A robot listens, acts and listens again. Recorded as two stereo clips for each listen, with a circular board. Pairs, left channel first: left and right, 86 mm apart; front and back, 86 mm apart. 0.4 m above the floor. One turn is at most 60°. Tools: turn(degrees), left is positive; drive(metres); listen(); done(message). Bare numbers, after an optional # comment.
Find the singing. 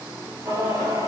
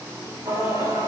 # The singing: 140° right.
turn(-60)
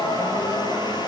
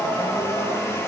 # The singing is now 95° right.
turn(-60)
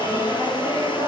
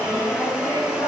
# The singing is now 60° right.
turn(-60)
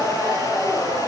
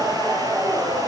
# The singing is now 30° right.
turn(-30)
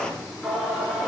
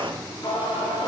done("Found it: singing, straight ahead.")